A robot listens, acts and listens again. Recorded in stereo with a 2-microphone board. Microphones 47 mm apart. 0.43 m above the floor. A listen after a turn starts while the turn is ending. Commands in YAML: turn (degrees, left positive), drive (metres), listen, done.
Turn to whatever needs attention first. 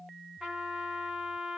listen: true
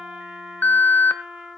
turn: 35
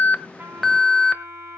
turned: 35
done: "Facing the alarm, 1 to 2 m away."